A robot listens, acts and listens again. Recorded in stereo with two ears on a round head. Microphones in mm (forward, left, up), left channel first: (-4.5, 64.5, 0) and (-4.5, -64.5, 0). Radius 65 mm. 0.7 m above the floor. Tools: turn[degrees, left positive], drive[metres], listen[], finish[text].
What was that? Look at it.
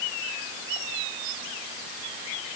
Action: listen[]
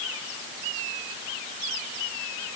Action: listen[]
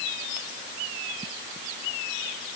Action: finish[I can't make out anything to turn to.]